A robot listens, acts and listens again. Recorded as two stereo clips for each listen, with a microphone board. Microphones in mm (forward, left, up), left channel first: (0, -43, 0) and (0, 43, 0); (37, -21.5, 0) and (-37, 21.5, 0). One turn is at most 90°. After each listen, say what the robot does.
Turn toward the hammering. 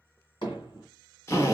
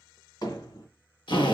Turn 70° right.
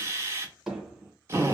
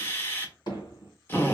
Facing the hammering.